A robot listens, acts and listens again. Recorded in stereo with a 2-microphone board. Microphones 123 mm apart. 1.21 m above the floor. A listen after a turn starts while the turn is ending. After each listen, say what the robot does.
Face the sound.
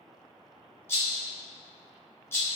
Turn 20° left.
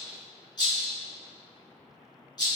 Turn 140° left.
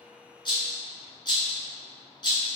Turn 45° left.
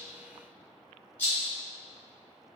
Turn 15° left.
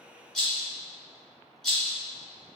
Facing the rattle.